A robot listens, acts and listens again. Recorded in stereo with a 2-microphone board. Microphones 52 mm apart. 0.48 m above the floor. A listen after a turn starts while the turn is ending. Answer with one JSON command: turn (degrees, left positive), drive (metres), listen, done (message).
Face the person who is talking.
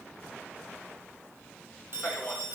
{"turn": 30}
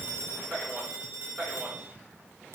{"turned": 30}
{"turn": -25}
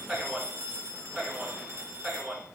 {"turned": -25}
{"turn": -25}
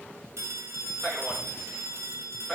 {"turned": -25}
{"turn": -10}
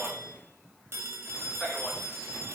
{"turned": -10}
{"done": "Found it: a man speaking, straight ahead, over 4 m away."}